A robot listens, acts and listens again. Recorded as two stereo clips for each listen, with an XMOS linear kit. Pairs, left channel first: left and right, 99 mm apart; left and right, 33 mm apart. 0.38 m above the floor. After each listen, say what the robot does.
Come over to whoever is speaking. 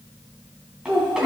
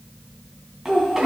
Turn 30° right.
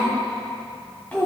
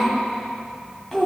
Turn 20° left.
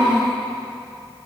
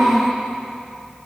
Drive 1.0 m forward.
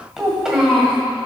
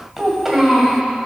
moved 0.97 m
Turn 10° right.
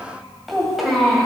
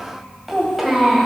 Drive 1.0 m forward.
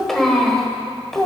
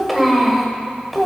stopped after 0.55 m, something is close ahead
Arrived at the child speaking, straight ahead.